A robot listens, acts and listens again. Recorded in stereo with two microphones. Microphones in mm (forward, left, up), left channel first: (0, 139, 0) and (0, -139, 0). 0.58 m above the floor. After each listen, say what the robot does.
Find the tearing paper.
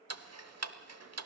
Keep listening.
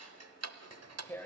Turn 30° left.
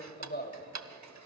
Turn 140° left.
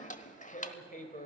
Turn 30° left.
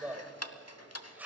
Found it: tearing paper, straight ahead, 2 to 4 m away.